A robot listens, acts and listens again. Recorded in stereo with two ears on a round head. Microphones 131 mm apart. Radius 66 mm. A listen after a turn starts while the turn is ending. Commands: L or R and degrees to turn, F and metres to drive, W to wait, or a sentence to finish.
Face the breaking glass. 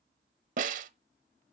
W
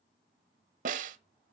W
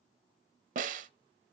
I can't make out breaking glass, only a snare drum.